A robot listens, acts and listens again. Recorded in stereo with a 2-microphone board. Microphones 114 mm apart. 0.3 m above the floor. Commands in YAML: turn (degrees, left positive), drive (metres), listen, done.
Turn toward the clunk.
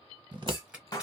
turn: 30
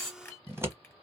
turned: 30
turn: 10
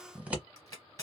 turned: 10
done: "I heard a clunk from this way, but can't make it out now."